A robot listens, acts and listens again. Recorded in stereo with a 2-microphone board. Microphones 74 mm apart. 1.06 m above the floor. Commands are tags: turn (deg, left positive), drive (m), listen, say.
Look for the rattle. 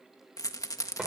<turn deg="50"/>
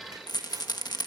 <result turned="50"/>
<turn deg="75"/>
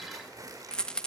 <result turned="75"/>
<turn deg="10"/>
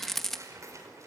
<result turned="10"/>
<say>Facing the rattle.</say>